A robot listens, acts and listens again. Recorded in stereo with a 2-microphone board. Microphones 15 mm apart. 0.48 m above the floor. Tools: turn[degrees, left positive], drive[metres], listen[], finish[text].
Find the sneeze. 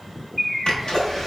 Thought: The sneeze: about 50° left or 130° left.
Action: turn[50]
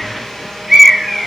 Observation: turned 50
Action: listen[]
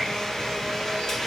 Action: finish[I heard a sneeze, but can't make it out now. It was about straight ahead or 80° left.]